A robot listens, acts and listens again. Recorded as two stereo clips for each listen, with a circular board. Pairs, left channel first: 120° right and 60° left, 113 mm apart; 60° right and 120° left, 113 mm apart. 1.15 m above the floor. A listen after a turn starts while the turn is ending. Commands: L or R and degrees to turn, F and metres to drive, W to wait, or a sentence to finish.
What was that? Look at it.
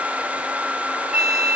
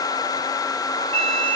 L145
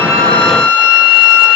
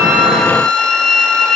L20
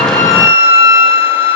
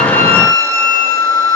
Facing the flute.